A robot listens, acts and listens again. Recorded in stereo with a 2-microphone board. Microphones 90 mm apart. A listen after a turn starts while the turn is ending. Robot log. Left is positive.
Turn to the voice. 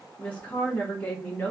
note: The woman speaking: about 15° left or 165° left.
cmd yaw +15
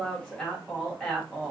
end: Facing the woman speaking.